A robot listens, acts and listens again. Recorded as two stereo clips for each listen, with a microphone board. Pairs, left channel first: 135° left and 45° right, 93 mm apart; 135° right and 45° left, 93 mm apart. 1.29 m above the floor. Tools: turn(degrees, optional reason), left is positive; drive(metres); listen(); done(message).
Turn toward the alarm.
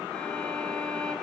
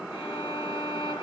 listen()
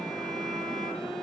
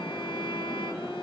listen()
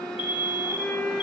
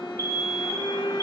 turn(degrees=165, reason="The alarm: 165° left.")
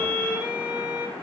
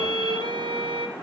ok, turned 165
listen()
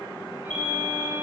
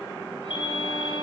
turn(degrees=-30, reason="The alarm is now 30° right.")
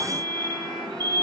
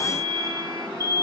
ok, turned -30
done("Facing the alarm.")